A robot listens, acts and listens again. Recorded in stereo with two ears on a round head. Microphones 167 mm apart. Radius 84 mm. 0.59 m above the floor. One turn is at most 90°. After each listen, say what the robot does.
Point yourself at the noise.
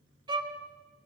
Turn 25° right.
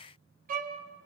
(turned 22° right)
Turn 90° right.
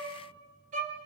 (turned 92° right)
Turn 40° right.
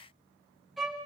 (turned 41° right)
Found it: a violin, straight ahead, 2 to 4 m away.